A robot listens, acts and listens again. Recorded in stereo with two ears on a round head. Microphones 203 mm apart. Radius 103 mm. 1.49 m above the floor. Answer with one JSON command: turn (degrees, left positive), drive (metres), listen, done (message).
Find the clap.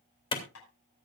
{"turn": 25}
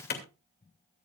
{"turn": 130}
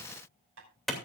{"done": "Found it: a clap, straight ahead."}